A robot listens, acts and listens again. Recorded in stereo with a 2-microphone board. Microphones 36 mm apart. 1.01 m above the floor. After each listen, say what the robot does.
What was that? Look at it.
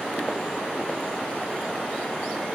Keep listening.
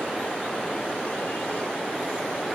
Keep listening.
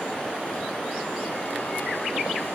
I can't make out anything to turn to.